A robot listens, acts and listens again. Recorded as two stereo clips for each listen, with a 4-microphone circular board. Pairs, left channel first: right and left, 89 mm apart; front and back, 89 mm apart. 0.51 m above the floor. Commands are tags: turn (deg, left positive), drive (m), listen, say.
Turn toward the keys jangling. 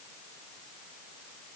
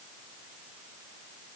<listen/>
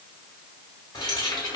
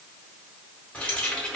<turn deg="-80"/>
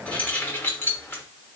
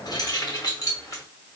<turn deg="-35"/>
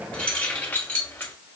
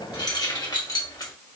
<turn deg="-30"/>
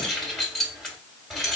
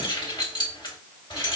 <say>Facing the keys jangling.</say>